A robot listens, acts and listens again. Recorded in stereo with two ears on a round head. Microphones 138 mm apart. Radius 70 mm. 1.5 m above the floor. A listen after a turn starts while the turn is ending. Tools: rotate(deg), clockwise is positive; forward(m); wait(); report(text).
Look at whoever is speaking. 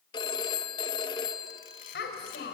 rotate(-90)
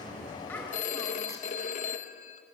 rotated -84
rotate(-10)
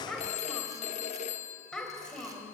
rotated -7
report("Found it: a child speaking, straight ahead.")